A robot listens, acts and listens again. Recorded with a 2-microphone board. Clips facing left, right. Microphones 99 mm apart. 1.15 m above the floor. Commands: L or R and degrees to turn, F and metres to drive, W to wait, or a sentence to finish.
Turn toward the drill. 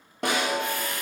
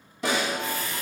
L60
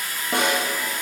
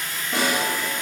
L10
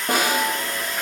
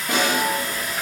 Found it: a drill, straight ahead, 1 to 2 m away.